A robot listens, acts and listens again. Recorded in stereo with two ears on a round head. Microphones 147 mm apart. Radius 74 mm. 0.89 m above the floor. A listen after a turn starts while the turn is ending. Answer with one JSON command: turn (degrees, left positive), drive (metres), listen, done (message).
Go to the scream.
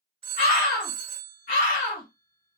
{"turn": 50}
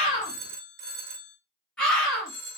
{"drive": 1.0}
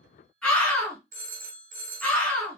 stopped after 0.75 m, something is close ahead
{"turn": 10}
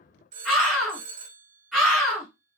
{"done": "I am next to the scream."}